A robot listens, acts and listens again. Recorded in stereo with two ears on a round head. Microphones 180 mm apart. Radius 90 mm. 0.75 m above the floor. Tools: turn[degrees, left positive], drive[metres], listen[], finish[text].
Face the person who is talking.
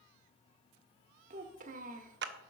Thought: The child speaking: about 40° right or 140° right.
Action: turn[-40]
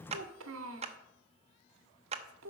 Thought: So it is at 95° right.
Action: turn[-95]
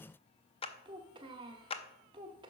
Thought: The child speaking is now 25° right.
Action: turn[-25]
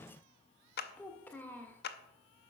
Thought: The child speaking is now 10° left.
Action: turn[10]
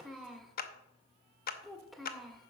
Action: finish[Found it: a child speaking, straight ahead.]